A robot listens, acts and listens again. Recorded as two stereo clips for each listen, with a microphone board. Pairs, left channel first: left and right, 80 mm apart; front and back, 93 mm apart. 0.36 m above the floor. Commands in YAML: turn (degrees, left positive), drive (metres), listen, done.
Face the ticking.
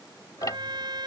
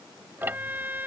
turn: 115
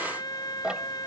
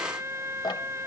turn: -10
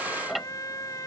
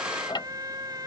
done: "Facing the ticking."